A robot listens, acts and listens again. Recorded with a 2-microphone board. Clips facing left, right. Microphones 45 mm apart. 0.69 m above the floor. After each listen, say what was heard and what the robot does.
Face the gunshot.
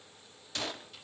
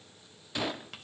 Turn 30° right.
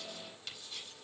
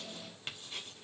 Keep listening.
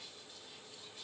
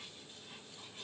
I heard a gunshot, but can't make it out now. It was about 15° left or 135° right.